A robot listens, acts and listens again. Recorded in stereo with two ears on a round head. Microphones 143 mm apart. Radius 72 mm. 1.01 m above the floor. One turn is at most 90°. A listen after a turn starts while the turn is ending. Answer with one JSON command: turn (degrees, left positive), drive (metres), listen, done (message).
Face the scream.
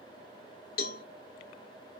{"listen": true}
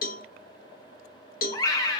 {"turn": 25}
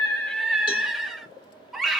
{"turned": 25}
{"done": "Facing the scream, 1 to 2 m away."}